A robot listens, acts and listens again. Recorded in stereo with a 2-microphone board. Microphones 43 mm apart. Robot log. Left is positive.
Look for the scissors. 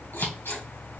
cmd yaw +90
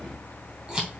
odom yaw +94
note: So it is at 15° right.
cmd yaw -15
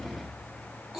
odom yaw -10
end: Facing the scissors.